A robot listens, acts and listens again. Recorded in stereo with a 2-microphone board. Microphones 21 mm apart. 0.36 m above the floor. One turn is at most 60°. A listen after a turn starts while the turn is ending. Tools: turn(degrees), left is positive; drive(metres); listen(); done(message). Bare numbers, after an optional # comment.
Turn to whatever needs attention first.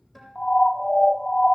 # The siren: about 55° left or 125° left.
turn(55)
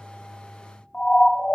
# So it is at 55° left.
turn(55)
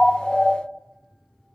# The siren is now 15° left.
turn(15)
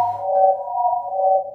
done("Found it: a siren, straight ahead, 2 to 4 m away.")